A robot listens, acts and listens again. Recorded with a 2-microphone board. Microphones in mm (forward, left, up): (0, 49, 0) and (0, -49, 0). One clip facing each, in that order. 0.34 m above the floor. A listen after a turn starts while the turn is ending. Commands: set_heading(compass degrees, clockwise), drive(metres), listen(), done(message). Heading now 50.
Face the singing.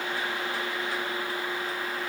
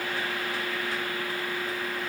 listen()
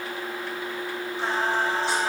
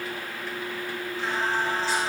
set_heading(345)
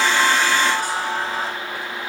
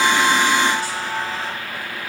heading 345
set_heading(280)
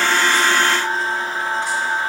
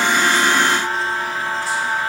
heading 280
done("Facing the singing, over 4 m away.")